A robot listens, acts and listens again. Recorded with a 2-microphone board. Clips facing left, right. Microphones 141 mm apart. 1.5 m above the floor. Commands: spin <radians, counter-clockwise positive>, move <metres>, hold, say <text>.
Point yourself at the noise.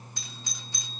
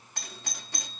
spin -1.13
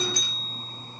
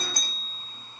spin -0.87
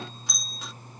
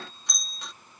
say Found it: a doorbell, straight ahead.